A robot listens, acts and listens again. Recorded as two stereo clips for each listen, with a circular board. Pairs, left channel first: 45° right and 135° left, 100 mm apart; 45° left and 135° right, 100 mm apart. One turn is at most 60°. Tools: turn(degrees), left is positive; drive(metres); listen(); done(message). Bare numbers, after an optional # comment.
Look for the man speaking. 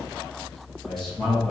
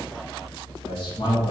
# The man speaking: 40° left.
turn(40)
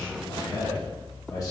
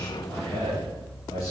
done("Facing the man speaking.")